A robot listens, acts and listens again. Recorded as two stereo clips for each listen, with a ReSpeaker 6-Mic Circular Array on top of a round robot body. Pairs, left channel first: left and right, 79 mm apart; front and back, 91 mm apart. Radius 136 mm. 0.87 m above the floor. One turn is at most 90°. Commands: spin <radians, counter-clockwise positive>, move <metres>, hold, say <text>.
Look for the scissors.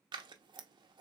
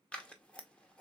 spin -1.31
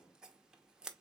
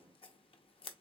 spin -0.17
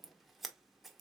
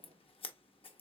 say Found it: scissors, straight ahead.